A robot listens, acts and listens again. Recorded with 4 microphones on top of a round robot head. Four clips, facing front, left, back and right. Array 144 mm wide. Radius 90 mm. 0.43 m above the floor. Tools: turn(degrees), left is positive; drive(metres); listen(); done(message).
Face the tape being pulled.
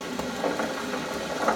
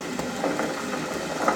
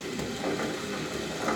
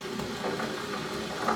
listen()
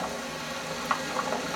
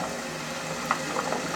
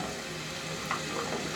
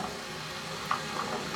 listen()
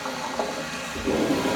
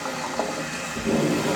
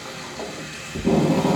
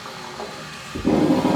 turn(degrees=-135)
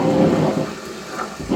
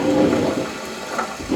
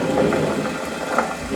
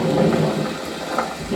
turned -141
turn(degrees=10)
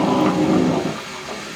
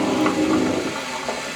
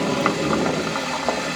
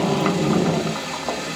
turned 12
done("Found it: tape being pulled, straight ahead, 1 to 2 m away.")